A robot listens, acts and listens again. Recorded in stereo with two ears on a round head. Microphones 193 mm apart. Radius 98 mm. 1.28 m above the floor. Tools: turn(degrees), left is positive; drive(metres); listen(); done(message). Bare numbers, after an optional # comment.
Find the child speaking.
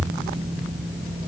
listen()
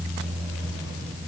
listen()
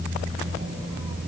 done("I can't make out a child speaking to turn to.")